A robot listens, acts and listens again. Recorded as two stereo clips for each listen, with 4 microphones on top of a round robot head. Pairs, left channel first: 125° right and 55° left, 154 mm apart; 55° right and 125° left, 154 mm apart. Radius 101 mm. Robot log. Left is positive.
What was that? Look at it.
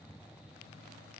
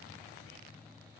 cmd idle
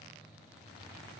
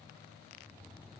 cmd idle
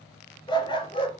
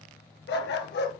note: The dog barking: 70° right.
cmd yaw -70
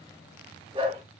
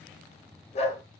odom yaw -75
end: Facing the dog barking.